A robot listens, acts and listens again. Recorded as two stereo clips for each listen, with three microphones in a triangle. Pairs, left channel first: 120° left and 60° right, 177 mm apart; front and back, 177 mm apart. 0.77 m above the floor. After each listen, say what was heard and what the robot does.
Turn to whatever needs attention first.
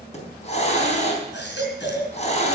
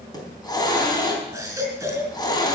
The baby crying: 105° left. Turn 105° left.
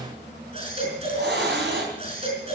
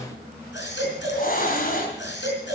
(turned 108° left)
Found it: a baby crying, straight ahead.